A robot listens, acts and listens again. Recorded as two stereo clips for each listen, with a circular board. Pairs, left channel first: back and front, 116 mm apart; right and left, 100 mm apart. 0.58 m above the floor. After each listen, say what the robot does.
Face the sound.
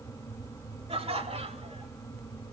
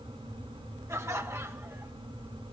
Turn 30° left.
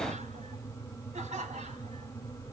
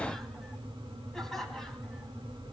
Found it: laughter, straight ahead.